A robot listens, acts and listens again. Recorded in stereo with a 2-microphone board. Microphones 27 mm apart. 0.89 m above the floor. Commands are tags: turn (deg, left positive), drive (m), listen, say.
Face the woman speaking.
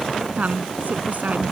<turn deg="-90"/>
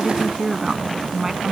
<turn deg="-15"/>
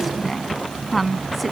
<say>Found it: a woman speaking, straight ahead.</say>